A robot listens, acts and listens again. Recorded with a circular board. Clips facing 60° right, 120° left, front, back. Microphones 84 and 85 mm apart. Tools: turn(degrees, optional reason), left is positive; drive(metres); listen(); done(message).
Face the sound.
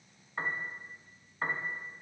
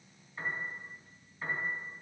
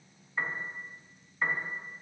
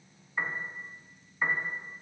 turn(degrees=-95, reason="The piano: 95° right.")
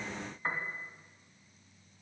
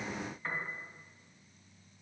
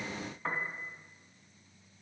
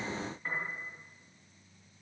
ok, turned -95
done("Facing the piano.")